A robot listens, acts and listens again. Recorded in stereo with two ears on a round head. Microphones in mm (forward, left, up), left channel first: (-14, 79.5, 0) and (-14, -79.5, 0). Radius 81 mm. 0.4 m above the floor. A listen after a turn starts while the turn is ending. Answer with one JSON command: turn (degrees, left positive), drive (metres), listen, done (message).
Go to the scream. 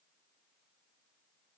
{"listen": true}
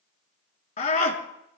{"turn": 45}
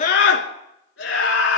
{"turn": 90}
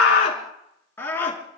{"turn": 15}
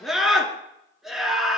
{"drive": 1.0}
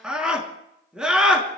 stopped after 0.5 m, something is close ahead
{"done": "Blocked. The scream is further on, straight ahead."}